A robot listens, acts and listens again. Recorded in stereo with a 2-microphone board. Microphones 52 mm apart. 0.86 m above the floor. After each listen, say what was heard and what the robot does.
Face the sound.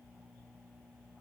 Keep listening.
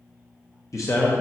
The man speaking: about 70° left or 110° left. Turn 70° left.
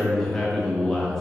So it is at 10° left. Turn 10° left.
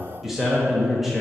Facing the man speaking.